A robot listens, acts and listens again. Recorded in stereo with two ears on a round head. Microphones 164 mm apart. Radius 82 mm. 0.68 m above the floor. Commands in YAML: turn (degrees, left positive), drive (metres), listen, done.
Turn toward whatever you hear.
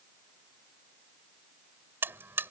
turn: -30
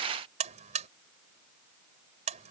turn: -140
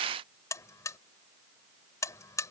turn: 20
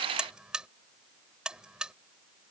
done: "Facing the buzzer."